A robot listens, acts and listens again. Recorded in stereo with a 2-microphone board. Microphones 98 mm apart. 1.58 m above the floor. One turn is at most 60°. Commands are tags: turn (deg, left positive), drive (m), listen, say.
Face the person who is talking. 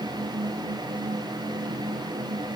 <listen/>
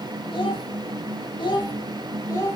<turn deg="30"/>
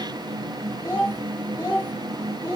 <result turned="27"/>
<turn deg="20"/>
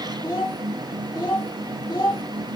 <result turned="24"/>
<turn deg="40"/>
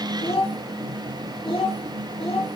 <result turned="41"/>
<turn deg="60"/>
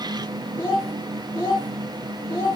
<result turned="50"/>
<turn deg="40"/>
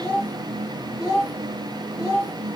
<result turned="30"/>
<turn deg="15"/>
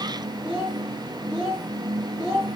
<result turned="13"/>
<say>Found it: a child speaking, straight ahead, 1 to 2 m away.</say>